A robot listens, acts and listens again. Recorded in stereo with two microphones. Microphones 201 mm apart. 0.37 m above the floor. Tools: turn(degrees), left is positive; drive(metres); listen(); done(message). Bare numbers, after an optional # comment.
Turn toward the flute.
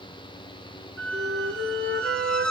# The flute: about 75° right or 105° right.
turn(-75)
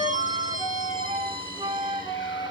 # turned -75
# So it is at 25° right.
turn(-25)
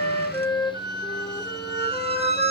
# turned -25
# The flute is now 10° left.
turn(10)
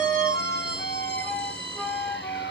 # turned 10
done("Facing the flute.")